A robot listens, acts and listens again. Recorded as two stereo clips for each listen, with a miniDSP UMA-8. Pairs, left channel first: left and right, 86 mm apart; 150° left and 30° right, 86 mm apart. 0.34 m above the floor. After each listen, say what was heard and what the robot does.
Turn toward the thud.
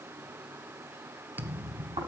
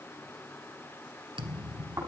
The thud: 20° right. Turn 20° right.
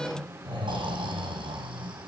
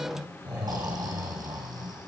Facing where the thud came from. I can't hear it now.